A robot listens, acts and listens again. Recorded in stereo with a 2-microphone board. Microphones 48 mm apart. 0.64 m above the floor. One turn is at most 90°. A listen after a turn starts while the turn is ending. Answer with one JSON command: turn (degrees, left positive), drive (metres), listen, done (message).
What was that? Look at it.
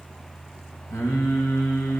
{"turn": 75}
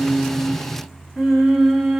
{"turn": -10}
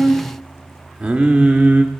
{"turn": -30}
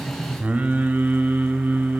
{"turn": -35}
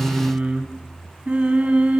{"turn": -25}
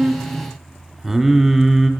{"done": "Facing the singing, 1 to 2 m away."}